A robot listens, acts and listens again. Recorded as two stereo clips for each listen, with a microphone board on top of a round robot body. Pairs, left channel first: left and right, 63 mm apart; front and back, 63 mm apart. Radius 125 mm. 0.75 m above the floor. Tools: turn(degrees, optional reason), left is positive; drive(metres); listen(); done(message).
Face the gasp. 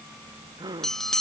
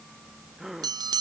turn(degrees=-95, reason="The gasp: 95° right.")
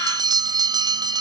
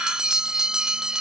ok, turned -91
done("I heard a gasp from this way, but can't make it out now.")